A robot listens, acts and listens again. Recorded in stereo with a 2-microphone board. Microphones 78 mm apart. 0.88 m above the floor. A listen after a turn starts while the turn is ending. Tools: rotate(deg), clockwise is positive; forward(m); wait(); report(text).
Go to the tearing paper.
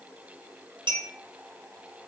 wait()
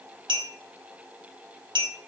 wait()
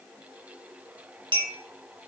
report("I can't make out tearing paper, only a clink.")